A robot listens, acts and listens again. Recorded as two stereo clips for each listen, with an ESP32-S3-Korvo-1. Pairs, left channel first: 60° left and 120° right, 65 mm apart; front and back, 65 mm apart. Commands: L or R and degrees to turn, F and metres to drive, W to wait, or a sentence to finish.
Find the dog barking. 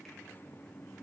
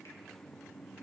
W
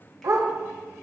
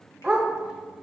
R105
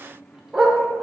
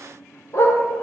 R35
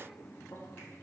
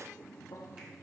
W
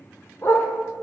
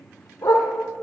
L20
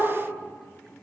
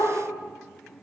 Facing the dog barking, under 1 m away.